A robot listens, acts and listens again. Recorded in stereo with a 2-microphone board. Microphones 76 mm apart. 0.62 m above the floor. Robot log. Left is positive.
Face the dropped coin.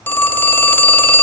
cmd idle
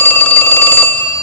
cmd idle
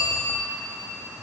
end: I can't make out a dropped coin, only a phone ringing.